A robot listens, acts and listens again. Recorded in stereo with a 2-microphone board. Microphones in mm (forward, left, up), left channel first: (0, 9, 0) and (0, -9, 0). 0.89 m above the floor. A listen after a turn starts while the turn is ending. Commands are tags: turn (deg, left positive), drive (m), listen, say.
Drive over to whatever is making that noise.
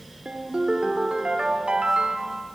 <turn deg="-75"/>
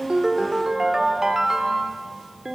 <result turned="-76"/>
<turn deg="-30"/>
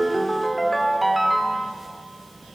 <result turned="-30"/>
<drive m="1.0"/>
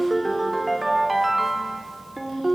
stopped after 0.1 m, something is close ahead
<say>Blocked. The ringtone is further on, straight ahead.</say>